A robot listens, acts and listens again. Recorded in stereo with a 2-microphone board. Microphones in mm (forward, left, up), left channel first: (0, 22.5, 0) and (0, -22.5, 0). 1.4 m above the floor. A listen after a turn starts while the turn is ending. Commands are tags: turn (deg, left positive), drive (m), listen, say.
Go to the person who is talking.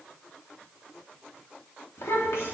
<turn deg="90"/>
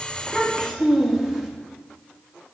<turn deg="-10"/>
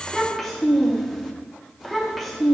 <drive m="1.0"/>
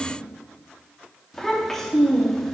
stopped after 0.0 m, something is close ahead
<say>Something is in my way. I am facing the child speaking but have not reached it.</say>